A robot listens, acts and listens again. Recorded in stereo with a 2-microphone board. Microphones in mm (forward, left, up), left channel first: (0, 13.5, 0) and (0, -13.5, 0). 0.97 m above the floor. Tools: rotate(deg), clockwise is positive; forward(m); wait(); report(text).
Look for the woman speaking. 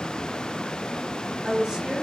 rotate(30)
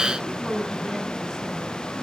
rotate(-20)
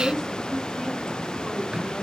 rotate(-10)
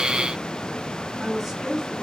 report("Found it: a woman speaking, straight ahead, over 4 m away.")